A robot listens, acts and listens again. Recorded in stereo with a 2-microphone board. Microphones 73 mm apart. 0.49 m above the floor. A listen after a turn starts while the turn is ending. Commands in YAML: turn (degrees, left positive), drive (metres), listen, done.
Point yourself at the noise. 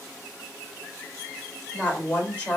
turn: 25
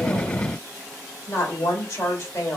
turn: 130
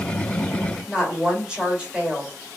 turn: -15
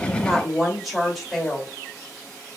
done: "Facing the woman speaking."